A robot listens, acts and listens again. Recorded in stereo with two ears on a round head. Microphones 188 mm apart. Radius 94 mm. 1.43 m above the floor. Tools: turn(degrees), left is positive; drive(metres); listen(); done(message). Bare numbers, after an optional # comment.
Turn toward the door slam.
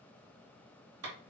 listen()
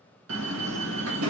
# The door slam: about 70° right or 110° right.
turn(-70)
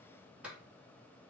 listen()
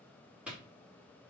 done("I heard a door slam, but can't make it out now. It was about straight ahead or 40° right.")